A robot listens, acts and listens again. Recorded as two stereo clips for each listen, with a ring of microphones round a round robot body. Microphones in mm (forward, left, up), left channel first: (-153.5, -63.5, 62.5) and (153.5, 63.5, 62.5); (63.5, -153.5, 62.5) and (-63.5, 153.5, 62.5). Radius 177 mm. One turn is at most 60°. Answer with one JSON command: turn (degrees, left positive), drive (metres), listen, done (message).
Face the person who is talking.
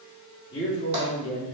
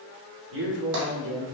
{"turn": 60}
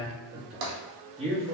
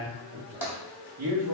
{"turn": 60}
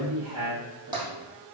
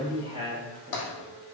{"turn": 50}
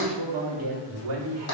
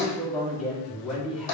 {"turn": 25}
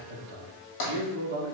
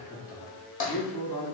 {"done": "Found it: a man speaking, straight ahead."}